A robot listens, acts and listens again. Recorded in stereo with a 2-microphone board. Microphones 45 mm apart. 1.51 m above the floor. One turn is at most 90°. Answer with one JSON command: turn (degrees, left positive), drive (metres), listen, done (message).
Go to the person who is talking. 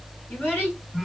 {"turn": 45}
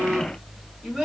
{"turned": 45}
{"drive": 1.0}
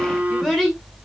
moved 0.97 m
{"drive": 1.0}
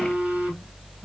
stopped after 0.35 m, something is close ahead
{"listen": true}
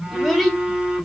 {"done": "I am next to the child speaking."}